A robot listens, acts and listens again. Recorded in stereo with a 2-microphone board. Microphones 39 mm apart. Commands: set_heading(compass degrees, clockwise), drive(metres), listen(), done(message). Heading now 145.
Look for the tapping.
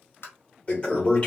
set_heading(55)
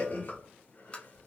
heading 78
set_heading(53)
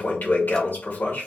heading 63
set_heading(53)
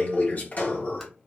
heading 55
listen()
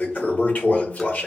done("Facing where the tapping came from. I can't hear it now.")